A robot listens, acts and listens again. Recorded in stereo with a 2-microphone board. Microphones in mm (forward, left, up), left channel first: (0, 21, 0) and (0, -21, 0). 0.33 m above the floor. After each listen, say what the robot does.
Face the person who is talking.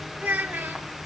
Turn 65° right.
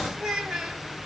Turn 10° right.
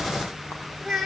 Found it: a child speaking, straight ahead.